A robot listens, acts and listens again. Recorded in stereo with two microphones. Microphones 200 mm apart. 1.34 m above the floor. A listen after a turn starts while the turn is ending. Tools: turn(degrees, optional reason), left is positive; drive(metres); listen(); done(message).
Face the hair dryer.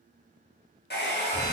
turn(degrees=55, reason="The hair dryer: about 55° left or 125° left.")
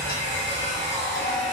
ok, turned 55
listen()
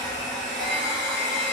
turn(degrees=50, reason="So it is at 50° left.")
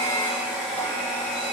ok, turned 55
done("Found it: a hair dryer, straight ahead, 1 to 2 m away.")